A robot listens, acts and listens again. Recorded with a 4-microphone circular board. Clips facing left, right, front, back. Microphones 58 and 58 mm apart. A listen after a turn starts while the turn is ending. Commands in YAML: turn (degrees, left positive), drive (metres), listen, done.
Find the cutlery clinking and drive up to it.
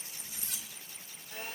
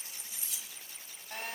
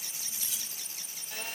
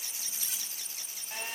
turn: 135
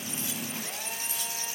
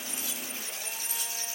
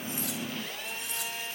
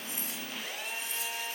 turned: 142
listen: true
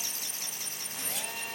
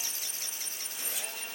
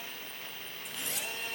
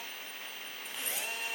listen: true
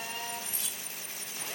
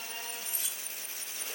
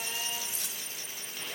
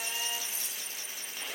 drive: 1.0
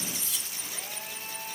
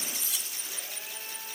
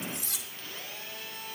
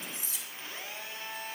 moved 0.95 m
drive: 1.0
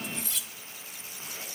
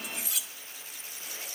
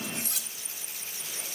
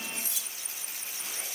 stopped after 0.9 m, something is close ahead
done: "I am next to the cutlery clinking."